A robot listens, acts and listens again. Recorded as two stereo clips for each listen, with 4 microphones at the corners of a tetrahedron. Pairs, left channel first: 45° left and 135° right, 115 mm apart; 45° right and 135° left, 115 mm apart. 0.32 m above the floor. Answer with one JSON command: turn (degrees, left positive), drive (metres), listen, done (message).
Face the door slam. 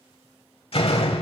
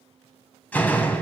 {"turn": 30}
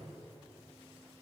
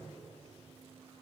{"done": "Facing where the door slam came from. I can't hear it now."}